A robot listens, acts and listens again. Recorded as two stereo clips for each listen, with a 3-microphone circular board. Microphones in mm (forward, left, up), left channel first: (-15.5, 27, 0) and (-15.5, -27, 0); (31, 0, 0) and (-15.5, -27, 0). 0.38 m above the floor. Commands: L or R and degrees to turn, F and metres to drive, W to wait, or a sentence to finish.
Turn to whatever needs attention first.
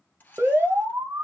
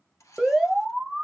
R65
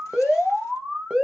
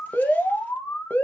R10
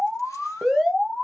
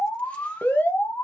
Facing the alarm.